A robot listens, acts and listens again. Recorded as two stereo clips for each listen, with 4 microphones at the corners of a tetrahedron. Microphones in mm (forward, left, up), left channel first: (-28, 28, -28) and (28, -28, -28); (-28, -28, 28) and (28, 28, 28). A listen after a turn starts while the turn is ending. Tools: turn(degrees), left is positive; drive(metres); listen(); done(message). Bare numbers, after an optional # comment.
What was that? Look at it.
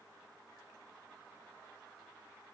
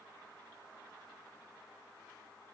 listen()
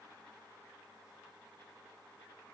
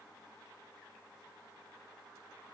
listen()
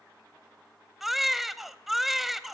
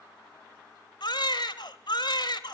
# The baby crying: 130° right.
turn(-130)
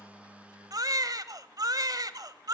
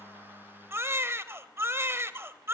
# The baby crying is now 10° right.
turn(-10)
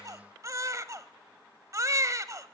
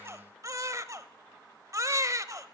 done("Found it: a baby crying, straight ahead, 1 to 2 m away.")